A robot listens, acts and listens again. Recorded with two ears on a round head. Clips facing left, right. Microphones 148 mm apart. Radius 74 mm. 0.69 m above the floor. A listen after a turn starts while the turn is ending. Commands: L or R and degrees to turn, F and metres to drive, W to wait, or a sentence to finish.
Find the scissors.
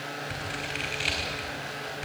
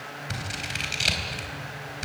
R55
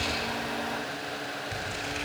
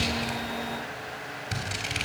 R70
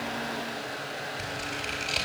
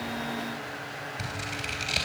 Facing the scissors, over 4 m away.